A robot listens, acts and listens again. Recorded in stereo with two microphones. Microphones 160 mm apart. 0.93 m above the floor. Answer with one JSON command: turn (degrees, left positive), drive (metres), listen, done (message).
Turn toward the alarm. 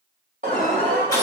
{"turn": -55}
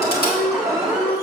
{"done": "Facing the alarm, 1 to 2 m away."}